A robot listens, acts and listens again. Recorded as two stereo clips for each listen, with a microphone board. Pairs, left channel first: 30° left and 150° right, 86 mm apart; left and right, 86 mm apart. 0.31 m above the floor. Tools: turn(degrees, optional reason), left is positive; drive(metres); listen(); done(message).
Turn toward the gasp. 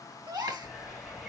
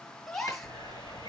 turn(degrees=175, reason="The gasp: 175° left.")
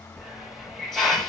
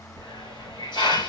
done("I heard a gasp from this way, but can't make it out now.")